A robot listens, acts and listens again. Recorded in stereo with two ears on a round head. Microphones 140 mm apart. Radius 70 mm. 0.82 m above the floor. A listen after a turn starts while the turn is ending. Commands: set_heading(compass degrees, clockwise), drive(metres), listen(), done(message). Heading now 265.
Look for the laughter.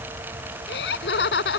set_heading(175)
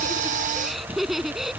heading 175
done("Found it: laughter, straight ahead.")